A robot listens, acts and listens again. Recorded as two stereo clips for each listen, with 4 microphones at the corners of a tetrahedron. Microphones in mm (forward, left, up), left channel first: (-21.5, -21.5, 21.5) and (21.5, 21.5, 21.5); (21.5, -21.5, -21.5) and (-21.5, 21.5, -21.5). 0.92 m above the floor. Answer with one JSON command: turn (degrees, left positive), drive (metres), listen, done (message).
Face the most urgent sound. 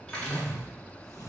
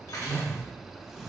{"listen": true}
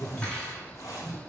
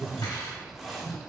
{"listen": true}
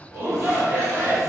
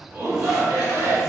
{"turn": 100}
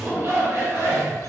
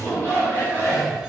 {"done": "Facing the shout."}